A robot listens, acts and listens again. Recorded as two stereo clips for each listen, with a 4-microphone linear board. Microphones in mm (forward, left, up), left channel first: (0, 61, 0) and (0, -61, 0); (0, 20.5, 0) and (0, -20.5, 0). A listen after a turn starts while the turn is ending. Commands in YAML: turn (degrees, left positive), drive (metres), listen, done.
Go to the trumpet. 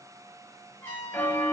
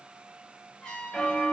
turn: 20
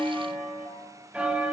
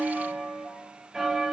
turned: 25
listen: true
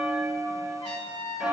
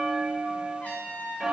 turn: 135
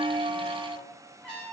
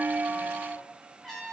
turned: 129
turn: 10
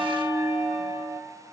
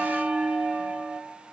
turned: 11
listen: true
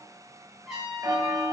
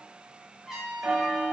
drive: 1.0
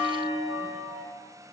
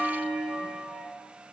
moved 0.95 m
listen: true
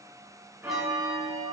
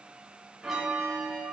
listen: true
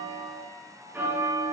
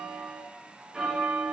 done: "Facing where the trumpet came from. I can't hear it now. I did not reach it."